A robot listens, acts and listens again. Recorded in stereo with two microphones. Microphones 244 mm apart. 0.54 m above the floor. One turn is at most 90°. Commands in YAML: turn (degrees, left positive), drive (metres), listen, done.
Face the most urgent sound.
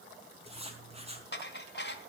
listen: true
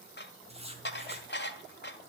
listen: true
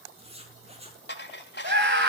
turn: -55
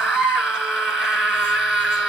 done: "Found it: a scream, straight ahead, over 4 m away."